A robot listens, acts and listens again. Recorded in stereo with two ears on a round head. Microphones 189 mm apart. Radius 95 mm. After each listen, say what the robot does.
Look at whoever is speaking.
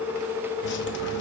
Keep listening.
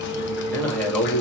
Turn 30° left.
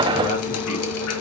Keep listening.
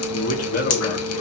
Turn 140° left.
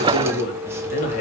Turn 35° left.
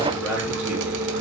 Keep listening.
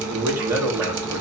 Turn 10° right.
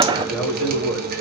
Facing the man speaking, 2 to 4 m away.